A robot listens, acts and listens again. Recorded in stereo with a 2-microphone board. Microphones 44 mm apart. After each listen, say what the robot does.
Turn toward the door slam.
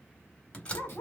Turn 30° left.
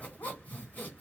Keep listening.
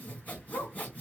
I heard a door slam, but can't make it out now. It was about straight ahead or 120° left.